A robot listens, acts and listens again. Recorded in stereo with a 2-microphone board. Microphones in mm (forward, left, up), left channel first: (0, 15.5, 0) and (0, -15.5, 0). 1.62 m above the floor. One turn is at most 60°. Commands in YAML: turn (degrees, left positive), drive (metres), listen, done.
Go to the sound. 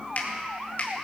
turn: 55
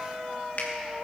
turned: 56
turn: 60
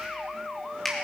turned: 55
turn: 10
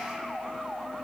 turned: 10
listen: true
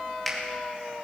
drive: 1.0
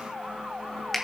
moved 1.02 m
drive: 1.0
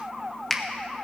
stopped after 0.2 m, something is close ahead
turn: 10
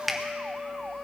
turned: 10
done: "Arrived at the finger snap, straight ahead."